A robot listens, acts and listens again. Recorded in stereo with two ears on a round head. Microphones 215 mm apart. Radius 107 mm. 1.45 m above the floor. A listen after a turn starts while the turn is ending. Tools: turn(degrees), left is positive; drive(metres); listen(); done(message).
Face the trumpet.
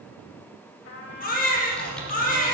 turn(degrees=60)
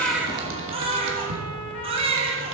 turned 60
listen()
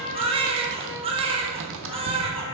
turn(degrees=55)
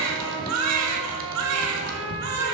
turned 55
turn(degrees=-30)
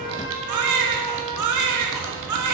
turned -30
turn(degrees=-10)
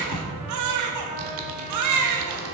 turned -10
listen()
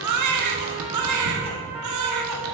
listen()
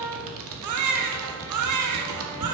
done("Found it: a trumpet, straight ahead, 2 to 4 m away.")